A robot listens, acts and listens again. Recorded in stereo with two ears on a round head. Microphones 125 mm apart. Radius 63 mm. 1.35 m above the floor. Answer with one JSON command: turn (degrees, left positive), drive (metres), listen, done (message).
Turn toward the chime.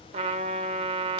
{"listen": true}
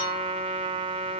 {"listen": true}
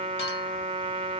{"done": "I can't make out a chime, only a trumpet."}